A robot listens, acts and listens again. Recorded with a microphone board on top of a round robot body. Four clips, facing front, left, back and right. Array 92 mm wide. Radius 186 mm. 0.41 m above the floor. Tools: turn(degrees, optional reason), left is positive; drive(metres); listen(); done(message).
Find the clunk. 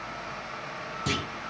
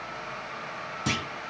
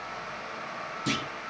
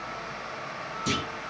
turn(degrees=80, reason="The clunk: 80° left.")
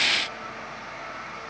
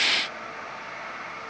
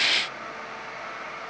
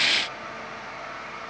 done("Facing where the clunk came from. I can't hear it now.")